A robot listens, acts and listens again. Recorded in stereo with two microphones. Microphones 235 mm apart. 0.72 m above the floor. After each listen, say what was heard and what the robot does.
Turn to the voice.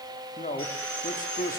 The man speaking: about 35° left or 145° left. Turn 35° left.
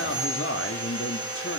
So it is at 110° left. Turn 110° left.
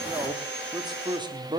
The man speaking is now 20° right. Turn 20° right.
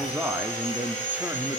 Found it: a man speaking, straight ahead.